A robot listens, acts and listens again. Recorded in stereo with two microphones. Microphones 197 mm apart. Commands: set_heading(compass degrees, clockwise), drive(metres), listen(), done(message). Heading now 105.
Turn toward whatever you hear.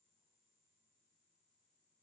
listen()
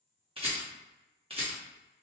set_heading(135)
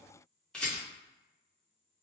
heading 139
done("Facing the rattle.")